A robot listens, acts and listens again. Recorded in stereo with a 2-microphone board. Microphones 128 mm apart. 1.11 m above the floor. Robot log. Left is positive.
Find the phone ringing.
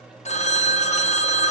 note: The phone ringing: about 60° left or 120° left.
cmd yaw +60
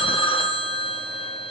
note: So it is at 45° left.
cmd yaw +45
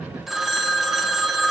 end: Facing the phone ringing.